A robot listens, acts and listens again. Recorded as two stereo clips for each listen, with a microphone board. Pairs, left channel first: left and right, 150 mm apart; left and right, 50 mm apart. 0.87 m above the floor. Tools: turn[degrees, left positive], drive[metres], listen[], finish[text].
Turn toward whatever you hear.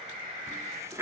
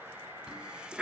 Thought: The running tap: about 20° right or 160° right.
Action: turn[-20]
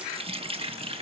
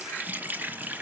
Thought: So it is at 140° right.
Action: turn[-140]
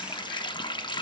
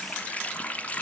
Thought: The running tap is now 30° left.
Action: turn[30]
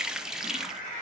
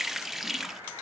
Action: finish[Found it: a running tap, straight ahead, under 1 m away.]